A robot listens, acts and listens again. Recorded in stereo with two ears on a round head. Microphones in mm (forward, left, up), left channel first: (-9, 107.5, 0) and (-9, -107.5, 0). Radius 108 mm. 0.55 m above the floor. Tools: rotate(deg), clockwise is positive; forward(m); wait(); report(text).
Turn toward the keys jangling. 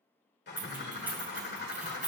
rotate(30)
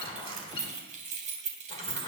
rotate(150)
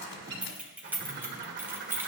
rotate(10)
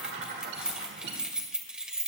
report("Found it: keys jangling, straight ahead.")